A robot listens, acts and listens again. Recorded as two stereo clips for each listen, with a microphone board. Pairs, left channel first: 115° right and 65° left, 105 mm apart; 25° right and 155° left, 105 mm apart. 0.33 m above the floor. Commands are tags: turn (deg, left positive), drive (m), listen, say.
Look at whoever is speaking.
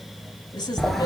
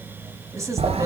<turn deg="-150"/>
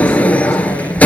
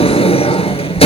<listen/>
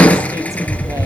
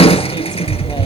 <listen/>
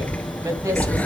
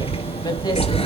<say>Facing where the woman speaking came from. I can't hear it now.</say>